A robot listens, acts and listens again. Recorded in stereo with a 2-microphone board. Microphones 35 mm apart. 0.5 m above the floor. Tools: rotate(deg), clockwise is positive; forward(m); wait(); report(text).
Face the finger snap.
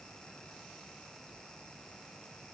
wait()
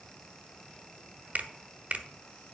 rotate(45)
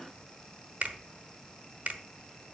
rotate(80)
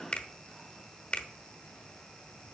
rotate(-30)
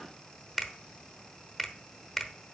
report("Facing the finger snap, 1 to 2 m away.")